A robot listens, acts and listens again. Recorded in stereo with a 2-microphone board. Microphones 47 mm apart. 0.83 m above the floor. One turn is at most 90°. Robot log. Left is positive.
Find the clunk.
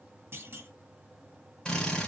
note: The clunk: about 50° right or 130° right.
cmd yaw -50
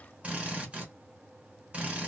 cmd idle
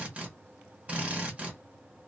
end: I heard a clunk, but can't make it out now. It was about straight ahead or 80° right.